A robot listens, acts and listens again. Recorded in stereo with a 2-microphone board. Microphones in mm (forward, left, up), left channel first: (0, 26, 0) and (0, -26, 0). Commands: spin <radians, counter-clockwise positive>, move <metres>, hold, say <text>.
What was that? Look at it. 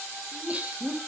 spin -0.44
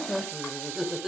spin -0.17
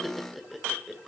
say Found it: laughter, straight ahead, 2 to 4 m away.